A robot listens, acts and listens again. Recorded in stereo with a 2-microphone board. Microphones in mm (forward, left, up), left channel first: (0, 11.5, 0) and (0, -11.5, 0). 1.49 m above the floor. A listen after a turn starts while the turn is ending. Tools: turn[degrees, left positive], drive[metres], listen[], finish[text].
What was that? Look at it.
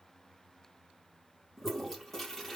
Action: turn[30]
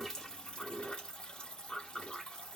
Thought: So it is at 135° left.
Action: turn[135]
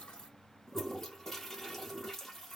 Thought: The toilet flushing is now 15° left.
Action: turn[15]
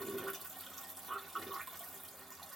Action: finish[Facing the toilet flushing.]